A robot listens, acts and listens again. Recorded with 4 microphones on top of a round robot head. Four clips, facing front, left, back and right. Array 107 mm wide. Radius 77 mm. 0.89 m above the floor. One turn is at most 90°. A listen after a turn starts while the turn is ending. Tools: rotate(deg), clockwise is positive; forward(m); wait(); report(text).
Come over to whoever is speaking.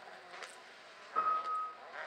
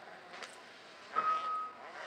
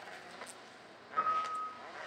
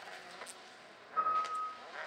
wait()
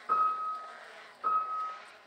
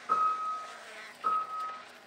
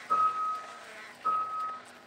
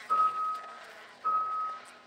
wait()
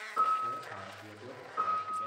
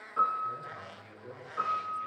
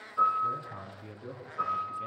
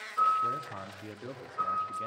rotate(85)
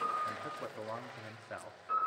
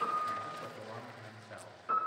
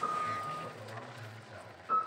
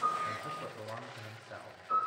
rotate(10)
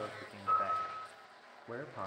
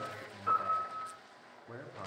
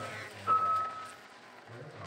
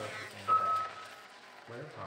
forward(1.0)
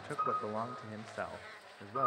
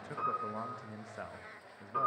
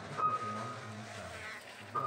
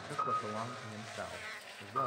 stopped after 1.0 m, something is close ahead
report("Arrived at the man speaking, straight ahead.")